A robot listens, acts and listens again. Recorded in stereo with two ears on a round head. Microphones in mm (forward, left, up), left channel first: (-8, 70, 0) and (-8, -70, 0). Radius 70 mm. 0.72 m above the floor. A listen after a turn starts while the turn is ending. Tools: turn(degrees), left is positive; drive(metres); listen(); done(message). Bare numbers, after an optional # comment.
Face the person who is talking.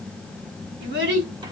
turn(-90)
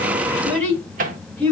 # So it is at 10° left.
turn(10)
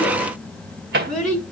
done("Facing the child speaking.")